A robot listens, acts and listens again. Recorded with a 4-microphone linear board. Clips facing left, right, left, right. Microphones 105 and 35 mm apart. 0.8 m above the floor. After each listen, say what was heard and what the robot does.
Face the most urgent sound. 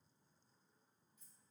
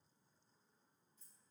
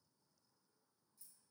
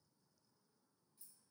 Keep listening.
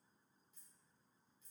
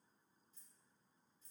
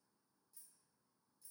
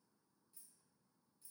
Keep listening.
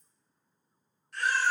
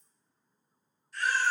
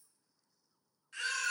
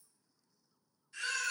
The baby crying: about 70° left or 110° left. Turn 70° left.
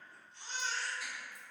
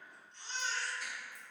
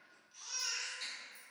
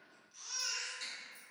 Found it: a baby crying, straight ahead, 1 to 2 m away.